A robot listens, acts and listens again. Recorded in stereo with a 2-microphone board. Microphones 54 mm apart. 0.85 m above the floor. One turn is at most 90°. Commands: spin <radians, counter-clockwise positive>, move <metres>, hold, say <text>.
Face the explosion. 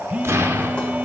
spin -0.96
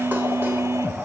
hold
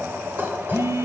say I heard an explosion, but can't make it out now. It was about straight ahead or 70° right.